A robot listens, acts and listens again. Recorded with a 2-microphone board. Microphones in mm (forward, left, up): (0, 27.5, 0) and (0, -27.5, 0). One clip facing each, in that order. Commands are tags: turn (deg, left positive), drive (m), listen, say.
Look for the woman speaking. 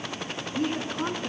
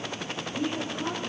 <turn deg="65"/>
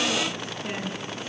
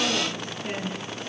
<say>Facing the woman speaking.</say>